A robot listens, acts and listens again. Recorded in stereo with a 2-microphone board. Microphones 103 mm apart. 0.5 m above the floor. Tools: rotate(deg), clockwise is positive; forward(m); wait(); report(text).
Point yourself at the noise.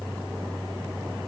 wait()
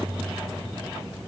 wait()
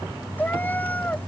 rotate(-15)
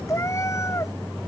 rotate(-30)
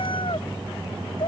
rotate(-125)
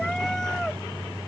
wait()
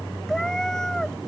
report("Found it: a cat meowing, straight ahead.")